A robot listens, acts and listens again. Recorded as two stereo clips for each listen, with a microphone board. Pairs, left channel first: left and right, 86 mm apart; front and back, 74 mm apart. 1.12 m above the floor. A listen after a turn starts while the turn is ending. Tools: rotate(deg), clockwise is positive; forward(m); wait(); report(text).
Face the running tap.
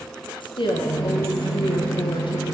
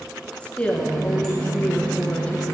rotate(150)
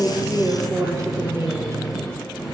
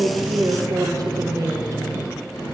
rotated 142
rotate(10)
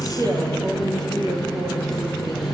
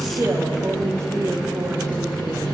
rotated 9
report("Found it: a running tap, straight ahead, 1 to 2 m away.")